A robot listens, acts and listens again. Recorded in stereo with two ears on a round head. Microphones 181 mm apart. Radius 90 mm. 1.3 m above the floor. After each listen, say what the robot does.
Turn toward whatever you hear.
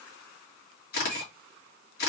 Turn 50° left.
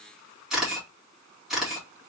Facing the camera shutter, 2 to 4 m away.